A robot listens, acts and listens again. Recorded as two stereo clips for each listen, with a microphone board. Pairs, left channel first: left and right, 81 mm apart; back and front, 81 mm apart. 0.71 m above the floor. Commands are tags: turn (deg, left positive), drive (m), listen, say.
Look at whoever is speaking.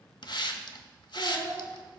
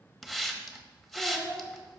<turn deg="-90"/>
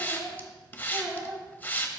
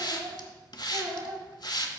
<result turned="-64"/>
<turn deg="-25"/>
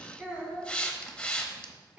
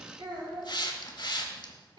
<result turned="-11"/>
<turn deg="-15"/>
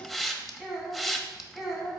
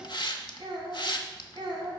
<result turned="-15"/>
<say>Facing the child speaking, 2 to 4 m away.</say>